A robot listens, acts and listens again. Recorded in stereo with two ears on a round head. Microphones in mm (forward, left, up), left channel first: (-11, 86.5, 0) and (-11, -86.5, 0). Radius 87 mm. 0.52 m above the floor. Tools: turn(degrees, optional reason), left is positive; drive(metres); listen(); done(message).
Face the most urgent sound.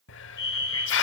turn(degrees=20, reason="The fire alarm: about 20° left or 160° left.")
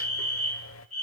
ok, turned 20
done("Facing the fire alarm, over 4 m away.")